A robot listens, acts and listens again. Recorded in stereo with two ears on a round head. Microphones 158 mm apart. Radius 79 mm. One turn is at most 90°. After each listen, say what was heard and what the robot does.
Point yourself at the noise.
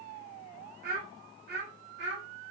The child speaking: about 65° right or 115° right. Turn 65° right.
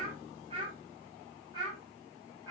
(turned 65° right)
So it is at 20° right. Turn 20° right.
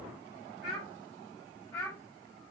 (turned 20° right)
Facing the child speaking, over 4 m away.